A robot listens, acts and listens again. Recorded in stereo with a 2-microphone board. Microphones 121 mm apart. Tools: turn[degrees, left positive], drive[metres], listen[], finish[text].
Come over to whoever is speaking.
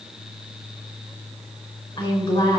Thought: The woman speaking: about 45° left or 135° left.
Action: turn[45]
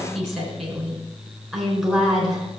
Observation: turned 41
Action: drive[1.0]
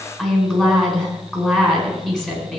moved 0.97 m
Action: drive[1.0]
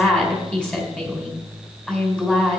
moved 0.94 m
Action: drive[1.0]
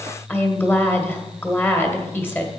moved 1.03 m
Thought: The woman speaking is now 20° left.
Action: turn[20]
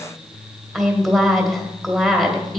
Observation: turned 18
Action: drive[1.0]
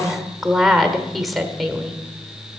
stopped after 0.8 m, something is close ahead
Action: finish[I am next to the woman speaking.]